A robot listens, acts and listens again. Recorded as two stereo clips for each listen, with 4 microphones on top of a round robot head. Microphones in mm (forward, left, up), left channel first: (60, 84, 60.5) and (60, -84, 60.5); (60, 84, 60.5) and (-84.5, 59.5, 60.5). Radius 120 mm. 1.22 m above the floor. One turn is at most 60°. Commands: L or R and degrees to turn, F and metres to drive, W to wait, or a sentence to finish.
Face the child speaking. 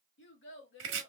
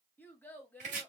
L60
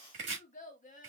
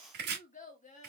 L45
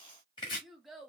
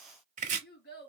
Found it: a child speaking, straight ahead, 1 to 2 m away.